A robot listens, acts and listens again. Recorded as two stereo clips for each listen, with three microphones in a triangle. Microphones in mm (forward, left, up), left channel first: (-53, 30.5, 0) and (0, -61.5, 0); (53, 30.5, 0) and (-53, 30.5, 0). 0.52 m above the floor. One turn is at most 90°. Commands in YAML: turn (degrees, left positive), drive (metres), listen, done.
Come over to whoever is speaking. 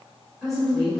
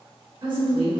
turn: -90
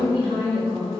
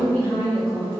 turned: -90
turn: -65
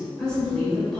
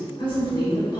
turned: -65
turn: 35
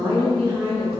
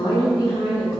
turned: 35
turn: -10
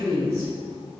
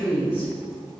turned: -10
drive: 1.0
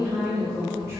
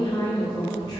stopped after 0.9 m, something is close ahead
turn: -10
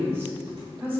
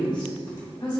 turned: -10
done: "I am next to the woman speaking."